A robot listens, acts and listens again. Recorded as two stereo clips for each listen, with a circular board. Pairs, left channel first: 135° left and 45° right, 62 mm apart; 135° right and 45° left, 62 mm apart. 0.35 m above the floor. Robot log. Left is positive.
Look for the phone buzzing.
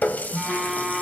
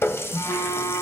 note: The phone buzzing: 135° right.
cmd yaw -135
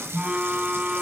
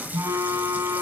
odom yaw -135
note: The phone buzzing is now 25° left.
cmd yaw +25
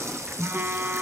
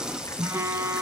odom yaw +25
end: Found it: a phone buzzing, straight ahead, 1 to 2 m away.